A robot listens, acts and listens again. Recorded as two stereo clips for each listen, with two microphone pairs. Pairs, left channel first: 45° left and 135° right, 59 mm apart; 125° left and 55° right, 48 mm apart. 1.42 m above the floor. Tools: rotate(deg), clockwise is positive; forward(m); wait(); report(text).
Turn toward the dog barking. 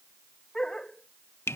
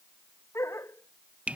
rotate(-125)
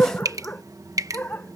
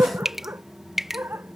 rotate(15)
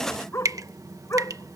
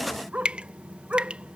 rotate(-10)
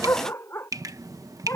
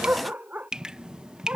report("Found it: a dog barking, straight ahead.")